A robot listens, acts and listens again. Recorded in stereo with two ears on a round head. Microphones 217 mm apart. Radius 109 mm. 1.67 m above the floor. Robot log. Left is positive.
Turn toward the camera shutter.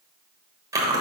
cmd idle
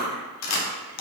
note: The camera shutter: about 70° left or 110° left.
cmd yaw +70
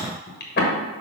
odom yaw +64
cmd idle
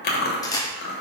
note: So it is at 15° left.
cmd yaw +15
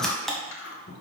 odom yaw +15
end: Found it: a camera shutter, straight ahead, 1 to 2 m away.